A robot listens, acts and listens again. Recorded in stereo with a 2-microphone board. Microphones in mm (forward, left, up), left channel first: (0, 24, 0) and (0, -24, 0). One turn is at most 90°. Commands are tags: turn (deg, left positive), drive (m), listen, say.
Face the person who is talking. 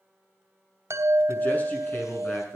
<turn deg="35"/>
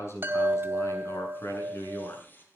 <turn deg="90"/>
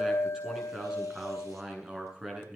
<turn deg="-10"/>
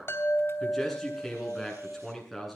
<say>Facing the man speaking, over 4 m away.</say>